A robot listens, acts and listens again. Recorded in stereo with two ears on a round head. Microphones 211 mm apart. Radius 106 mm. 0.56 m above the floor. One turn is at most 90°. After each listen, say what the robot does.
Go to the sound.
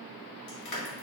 Turn 90° left.
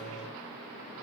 Keep listening.
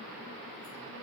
Keep listening.
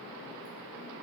I heard crushing from this way, but can't make it out now. I did not reach it.